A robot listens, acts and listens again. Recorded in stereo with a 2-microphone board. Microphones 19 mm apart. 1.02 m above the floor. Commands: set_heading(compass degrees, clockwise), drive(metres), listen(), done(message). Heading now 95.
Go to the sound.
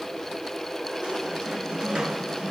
set_heading(150)
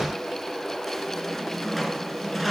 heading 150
drive(1.0)
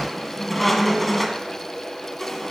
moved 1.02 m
drive(1.0)
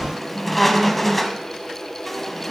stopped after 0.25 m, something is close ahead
set_heading(140)
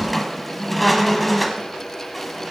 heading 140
done("Arrived at the squeak, straight ahead.")